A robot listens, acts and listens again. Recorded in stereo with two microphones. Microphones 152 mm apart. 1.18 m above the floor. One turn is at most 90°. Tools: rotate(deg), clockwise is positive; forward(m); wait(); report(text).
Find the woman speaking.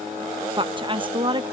rotate(30)
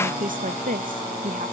rotate(90)
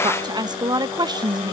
rotate(30)
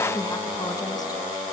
wait()
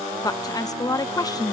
rotate(-25)
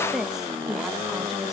report("Found it: a woman speaking, straight ahead.")